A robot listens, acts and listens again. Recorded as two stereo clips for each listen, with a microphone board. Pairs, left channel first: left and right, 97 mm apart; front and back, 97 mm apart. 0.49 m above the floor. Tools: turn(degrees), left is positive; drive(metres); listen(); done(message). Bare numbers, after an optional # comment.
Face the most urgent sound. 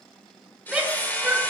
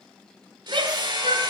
# The shout: 175° right.
turn(-175)
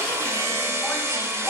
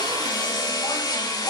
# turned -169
listen()
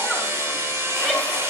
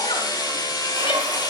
listen()
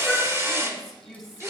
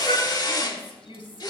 done("Found it: a shout, straight ahead, 2 to 4 m away.")